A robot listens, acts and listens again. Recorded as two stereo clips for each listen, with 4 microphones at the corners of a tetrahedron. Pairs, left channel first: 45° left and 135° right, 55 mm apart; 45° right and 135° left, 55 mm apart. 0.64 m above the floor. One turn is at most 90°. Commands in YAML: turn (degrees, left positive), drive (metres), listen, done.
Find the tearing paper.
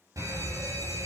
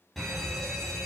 listen: true
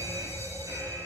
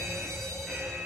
listen: true
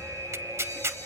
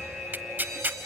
turn: -90
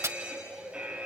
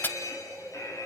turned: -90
turn: -90
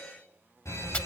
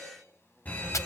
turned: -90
turn: -10
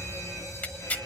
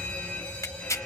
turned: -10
turn: -15
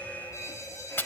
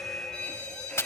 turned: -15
done: "Found it: tearing paper, straight ahead."